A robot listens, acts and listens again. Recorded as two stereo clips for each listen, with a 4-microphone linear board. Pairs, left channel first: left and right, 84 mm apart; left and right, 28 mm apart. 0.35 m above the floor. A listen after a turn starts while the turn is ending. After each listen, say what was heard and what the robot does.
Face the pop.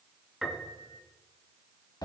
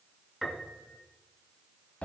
Keep listening.
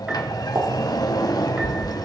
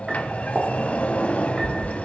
The pop: about 65° right or 115° right. Turn 65° right.
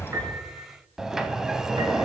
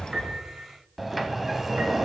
Keep listening.
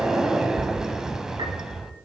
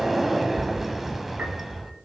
I heard a pop, but can't make it out now. It was about straight ahead or 50° right.